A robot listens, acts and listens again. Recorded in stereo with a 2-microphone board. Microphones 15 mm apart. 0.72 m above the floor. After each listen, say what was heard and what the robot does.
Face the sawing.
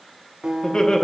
Keep listening.
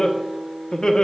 Keep listening.
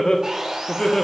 The sawing: about 45° right or 135° right. Turn 45° right.
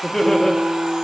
Keep listening.
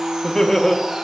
So it is at 90° right. Turn 90° right.
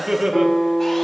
Keep listening.
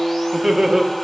Keep listening.
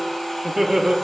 Found it: sawing, straight ahead.